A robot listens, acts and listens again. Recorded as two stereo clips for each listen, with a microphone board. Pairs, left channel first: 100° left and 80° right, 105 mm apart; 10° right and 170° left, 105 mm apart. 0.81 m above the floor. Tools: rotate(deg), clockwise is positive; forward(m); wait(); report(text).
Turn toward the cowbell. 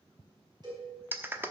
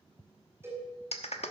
rotate(125)
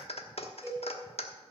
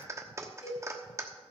rotate(10)
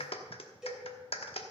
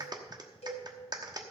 report("Facing the cowbell, over 4 m away.")